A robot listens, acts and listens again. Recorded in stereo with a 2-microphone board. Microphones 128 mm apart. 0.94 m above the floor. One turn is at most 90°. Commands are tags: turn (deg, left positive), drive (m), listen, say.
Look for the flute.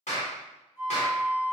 <turn deg="55"/>
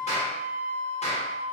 <say>Found it: a flute, straight ahead, 1 to 2 m away.</say>